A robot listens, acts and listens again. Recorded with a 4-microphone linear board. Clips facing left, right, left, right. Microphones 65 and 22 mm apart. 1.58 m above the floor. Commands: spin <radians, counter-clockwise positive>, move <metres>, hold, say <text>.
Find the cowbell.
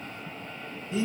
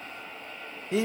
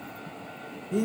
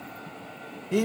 hold
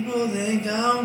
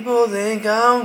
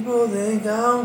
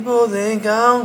hold
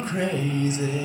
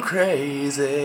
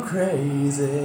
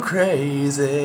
say I can't make out a cowbell, only singing.